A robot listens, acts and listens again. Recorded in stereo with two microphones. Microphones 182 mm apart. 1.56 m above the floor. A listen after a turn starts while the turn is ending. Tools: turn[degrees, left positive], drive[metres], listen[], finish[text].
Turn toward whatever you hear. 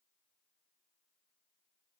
Action: listen[]
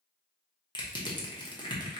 Thought: The crushing: about 25° left or 155° left.
Action: turn[25]
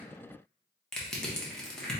Action: finish[Found it: crushing, straight ahead.]